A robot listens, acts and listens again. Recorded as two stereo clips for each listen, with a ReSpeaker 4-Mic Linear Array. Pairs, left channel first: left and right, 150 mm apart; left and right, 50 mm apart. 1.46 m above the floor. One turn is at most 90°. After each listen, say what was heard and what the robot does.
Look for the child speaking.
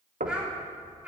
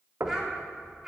Turn 30° right.
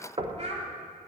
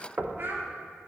So it is at 130° right. Turn 90° right.
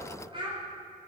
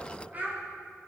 The child speaking is now 35° right. Turn 35° right.
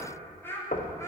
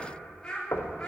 The child speaking is now 15° left. Turn 15° left.
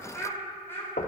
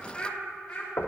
The child speaking is now 20° left. Turn 20° left.
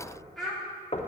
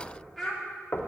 Found it: a child speaking, straight ahead.